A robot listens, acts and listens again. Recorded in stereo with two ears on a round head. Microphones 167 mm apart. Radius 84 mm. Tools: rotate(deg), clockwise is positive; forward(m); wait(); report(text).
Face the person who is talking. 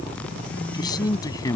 rotate(-20)
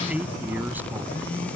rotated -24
wait()
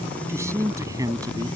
rotate(20)
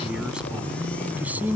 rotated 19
rotate(10)
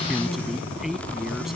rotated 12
report("Facing the man speaking.")